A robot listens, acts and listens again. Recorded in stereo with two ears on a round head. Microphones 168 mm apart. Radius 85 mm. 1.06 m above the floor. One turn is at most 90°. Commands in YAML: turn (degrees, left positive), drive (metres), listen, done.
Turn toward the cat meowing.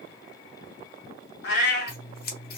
turn: 60
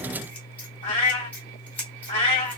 turn: 45
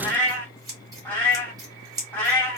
turn: 10
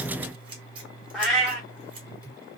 done: "Found it: a cat meowing, straight ahead."